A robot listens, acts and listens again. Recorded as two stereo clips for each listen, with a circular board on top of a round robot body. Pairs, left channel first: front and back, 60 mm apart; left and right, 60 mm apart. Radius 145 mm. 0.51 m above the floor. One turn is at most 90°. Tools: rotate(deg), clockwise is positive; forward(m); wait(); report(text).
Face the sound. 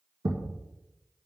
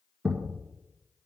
rotate(90)
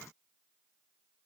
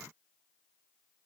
rotate(75)
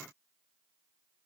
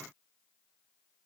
report("I heard a thud from this way, but can't make it out now.")